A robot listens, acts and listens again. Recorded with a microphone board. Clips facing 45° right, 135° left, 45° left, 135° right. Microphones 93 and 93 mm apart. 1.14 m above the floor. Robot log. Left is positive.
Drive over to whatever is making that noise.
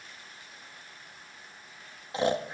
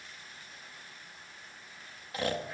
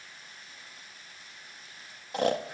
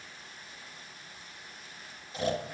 note: The snoring: 20° left.
cmd yaw +20
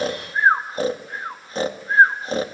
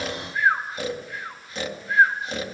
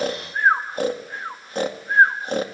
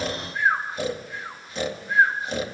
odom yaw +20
cmd fwd 1.0
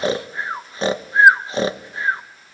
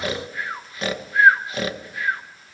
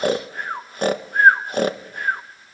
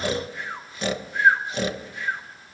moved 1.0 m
note: The snoring is now 10° left.
cmd yaw +10
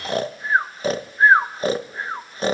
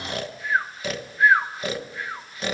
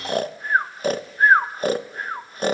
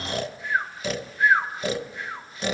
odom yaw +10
cmd fwd 1.0
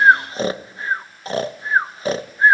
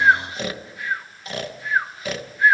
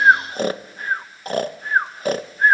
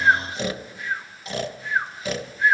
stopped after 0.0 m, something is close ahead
end: Arrived at the snoring, straight ahead.